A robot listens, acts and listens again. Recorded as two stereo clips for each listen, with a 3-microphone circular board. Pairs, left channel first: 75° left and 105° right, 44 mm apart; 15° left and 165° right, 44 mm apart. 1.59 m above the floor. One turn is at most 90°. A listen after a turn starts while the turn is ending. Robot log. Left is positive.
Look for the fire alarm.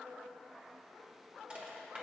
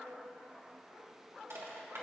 cmd idle
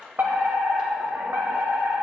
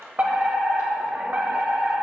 note: The fire alarm: 115° right.
cmd yaw -90
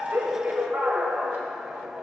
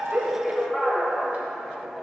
note: The fire alarm is now 60° right.
cmd yaw -60
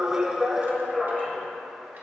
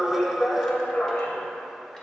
end: Found it: a fire alarm, straight ahead.